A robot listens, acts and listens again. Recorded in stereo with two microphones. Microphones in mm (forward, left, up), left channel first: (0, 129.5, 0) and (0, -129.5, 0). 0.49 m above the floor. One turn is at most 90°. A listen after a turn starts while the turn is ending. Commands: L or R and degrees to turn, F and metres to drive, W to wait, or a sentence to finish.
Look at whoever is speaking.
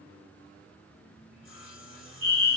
W
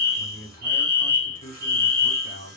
L35
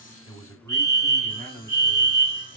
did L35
L10
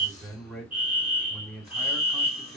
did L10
Found it: a man speaking, straight ahead, 2 to 4 m away.